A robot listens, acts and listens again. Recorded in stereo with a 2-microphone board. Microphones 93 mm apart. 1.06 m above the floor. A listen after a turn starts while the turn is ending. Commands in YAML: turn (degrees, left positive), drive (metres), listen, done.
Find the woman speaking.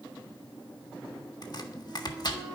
listen: true
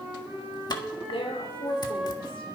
turn: 75
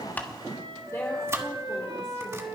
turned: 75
listen: true
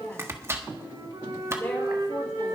listen: true
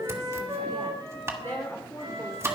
turn: 25
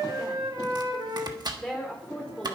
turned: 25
done: "Found it: a woman speaking, straight ahead, 2 to 4 m away."